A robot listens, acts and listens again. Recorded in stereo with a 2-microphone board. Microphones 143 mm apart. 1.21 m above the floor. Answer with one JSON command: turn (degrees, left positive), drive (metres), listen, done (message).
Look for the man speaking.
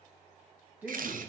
{"turn": -30}
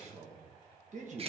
{"turn": -125}
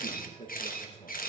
{"turn": 40}
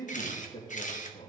{"turn": 35}
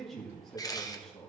{"done": "Facing the man speaking, 1 to 2 m away."}